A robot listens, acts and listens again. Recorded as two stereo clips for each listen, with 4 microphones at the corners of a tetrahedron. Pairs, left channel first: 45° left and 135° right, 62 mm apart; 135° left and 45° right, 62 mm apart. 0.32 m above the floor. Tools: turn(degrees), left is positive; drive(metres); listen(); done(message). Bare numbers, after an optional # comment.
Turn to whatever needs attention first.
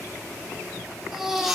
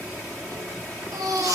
# The baby crying: 55° right.
turn(-55)
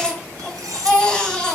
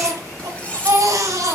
# The baby crying is now 30° right.
turn(-30)
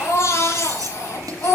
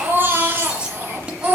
done("Facing the baby crying, 2 to 4 m away.")